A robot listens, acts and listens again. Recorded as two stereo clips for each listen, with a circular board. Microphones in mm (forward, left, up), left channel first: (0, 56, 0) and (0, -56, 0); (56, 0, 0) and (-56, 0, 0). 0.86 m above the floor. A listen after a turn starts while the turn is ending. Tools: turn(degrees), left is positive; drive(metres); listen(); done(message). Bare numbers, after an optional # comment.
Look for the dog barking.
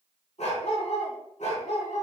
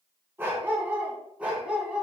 # The dog barking: 100° left.
turn(100)
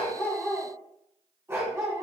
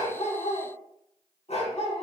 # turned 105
# The dog barking is now 25° right.
turn(-25)
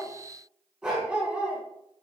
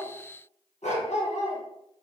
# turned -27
# The dog barking is now 10° right.
turn(-10)
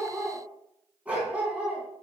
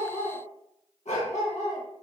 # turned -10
# The dog barking is now 10° right.
turn(-10)
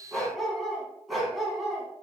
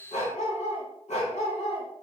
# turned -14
done("Found it: a dog barking, straight ahead.")